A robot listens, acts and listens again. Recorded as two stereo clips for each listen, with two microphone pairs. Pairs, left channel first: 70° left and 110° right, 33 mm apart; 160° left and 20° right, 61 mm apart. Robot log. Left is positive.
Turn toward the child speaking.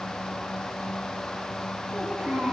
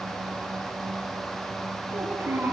note: The child speaking: 70° right.
cmd yaw -70
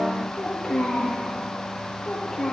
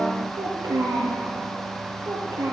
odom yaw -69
note: The child speaking is now 15° right.
cmd yaw -15
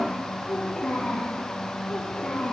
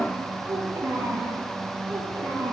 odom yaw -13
end: Facing the child speaking, over 4 m away.